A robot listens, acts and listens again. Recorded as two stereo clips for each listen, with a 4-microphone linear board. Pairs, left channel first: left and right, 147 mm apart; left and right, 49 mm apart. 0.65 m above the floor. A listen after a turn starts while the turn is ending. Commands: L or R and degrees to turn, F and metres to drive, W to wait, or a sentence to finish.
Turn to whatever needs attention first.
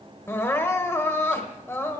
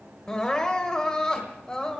L15
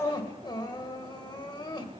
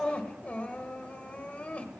L145
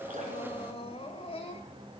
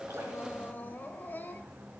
L45
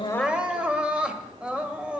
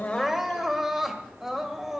R10
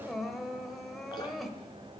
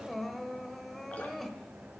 Facing the crying, 1 to 2 m away.